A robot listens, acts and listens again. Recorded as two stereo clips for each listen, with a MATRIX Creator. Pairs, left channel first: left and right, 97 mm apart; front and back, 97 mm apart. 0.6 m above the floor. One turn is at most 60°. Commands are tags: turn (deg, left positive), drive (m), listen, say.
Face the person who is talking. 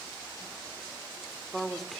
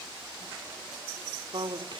<turn deg="60"/>
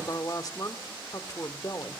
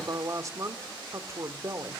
<turn deg="60"/>
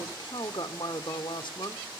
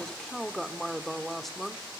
<turn deg="60"/>
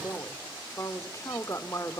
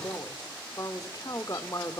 <turn deg="40"/>
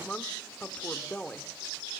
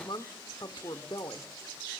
<turn deg="20"/>
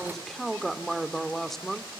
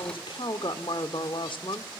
<say>Found it: a woman speaking, straight ahead, 1 to 2 m away.</say>